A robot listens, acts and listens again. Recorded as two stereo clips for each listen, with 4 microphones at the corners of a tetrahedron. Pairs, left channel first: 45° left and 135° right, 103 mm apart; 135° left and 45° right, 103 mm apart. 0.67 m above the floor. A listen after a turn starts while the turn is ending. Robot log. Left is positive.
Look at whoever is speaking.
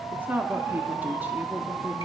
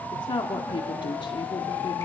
note: The woman speaking: 155° left.
cmd yaw +155
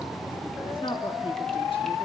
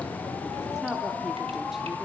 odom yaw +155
note: The woman speaking is now 40° left.
cmd yaw +40
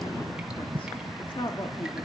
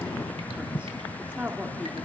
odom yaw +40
note: The woman speaking is now 25° left.
cmd yaw +25
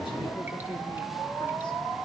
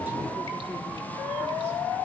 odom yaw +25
cmd idle
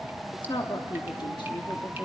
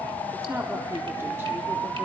note: The woman speaking is now 15° left.
cmd yaw +15
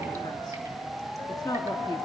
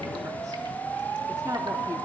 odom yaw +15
cmd idle
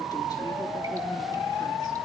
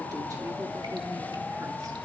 cmd idle
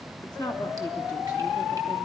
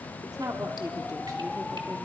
end: Found it: a woman speaking, straight ahead, 1 to 2 m away.